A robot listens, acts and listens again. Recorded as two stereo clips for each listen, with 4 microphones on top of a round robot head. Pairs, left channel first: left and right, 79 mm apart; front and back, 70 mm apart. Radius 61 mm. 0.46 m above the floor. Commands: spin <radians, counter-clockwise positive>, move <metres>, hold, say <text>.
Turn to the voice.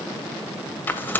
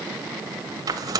hold
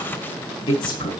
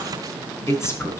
spin 0.87
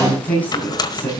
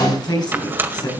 spin 0.26
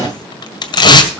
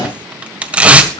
say Facing the woman speaking.